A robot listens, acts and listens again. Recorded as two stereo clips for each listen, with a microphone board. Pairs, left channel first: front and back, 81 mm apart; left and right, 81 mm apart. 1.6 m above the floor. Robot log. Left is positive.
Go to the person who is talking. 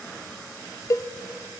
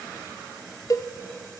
cmd idle
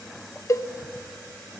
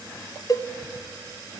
cmd idle
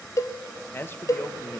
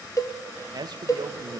note: The man speaking: 60° right.
cmd yaw -60
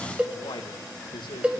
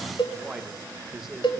cmd fwd 1.0
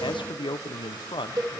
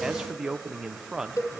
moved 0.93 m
cmd fwd 1.0
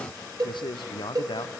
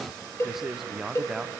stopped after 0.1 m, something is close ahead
end: Arrived at the man speaking, straight ahead.